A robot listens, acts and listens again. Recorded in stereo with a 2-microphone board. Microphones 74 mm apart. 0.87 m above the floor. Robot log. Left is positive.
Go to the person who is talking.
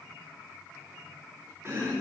cmd idle
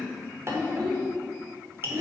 cmd yaw -90
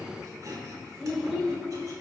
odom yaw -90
cmd fwd 1.0
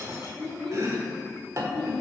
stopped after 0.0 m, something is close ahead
note: The child speaking is now 10° left.
cmd yaw +10
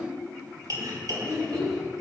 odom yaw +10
end: Something is in my way. I am facing the child speaking but have not reached it.